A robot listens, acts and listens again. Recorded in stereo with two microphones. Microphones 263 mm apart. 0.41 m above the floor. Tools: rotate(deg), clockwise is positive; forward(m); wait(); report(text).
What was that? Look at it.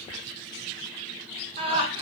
rotate(20)
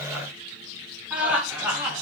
rotate(30)
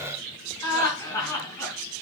rotate(-10)
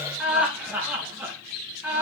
report("Found it: laughter, straight ahead.")